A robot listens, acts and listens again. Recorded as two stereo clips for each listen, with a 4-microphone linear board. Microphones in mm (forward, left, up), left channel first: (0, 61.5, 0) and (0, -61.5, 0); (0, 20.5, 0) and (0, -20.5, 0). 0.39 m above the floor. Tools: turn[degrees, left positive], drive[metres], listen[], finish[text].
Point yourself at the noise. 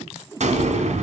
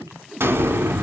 Thought: The explosion: about 70° right or 110° right.
Action: turn[-70]
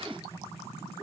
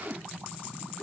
Action: listen[]
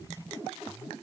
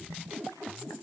Action: finish[I heard an explosion, but can't make it out now. It was about straight ahead or 40° right.]